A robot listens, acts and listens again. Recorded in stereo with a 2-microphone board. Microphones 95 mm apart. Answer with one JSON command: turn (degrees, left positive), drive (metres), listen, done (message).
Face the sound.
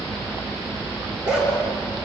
{"turn": -30}
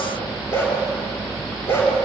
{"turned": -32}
{"turn": 25}
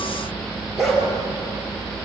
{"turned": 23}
{"done": "Found it: a dog barking, straight ahead."}